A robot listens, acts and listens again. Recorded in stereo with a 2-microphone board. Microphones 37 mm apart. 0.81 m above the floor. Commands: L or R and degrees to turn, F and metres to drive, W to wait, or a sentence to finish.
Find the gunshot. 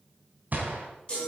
R50
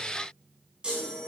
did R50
W
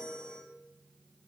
I heard a gunshot, but can't make it out now. It was about straight ahead or 80° right.